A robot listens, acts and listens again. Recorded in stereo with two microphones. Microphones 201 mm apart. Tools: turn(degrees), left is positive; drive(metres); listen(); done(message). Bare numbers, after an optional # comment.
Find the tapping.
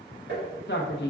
# The tapping: about 60° right or 120° right.
turn(-60)
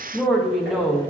listen()
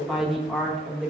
listen()
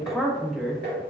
# So it is at 60° right.
turn(-60)
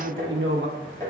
# The tapping is now 20° left.
turn(20)
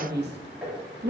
done("Facing the tapping, 1 to 2 m away.")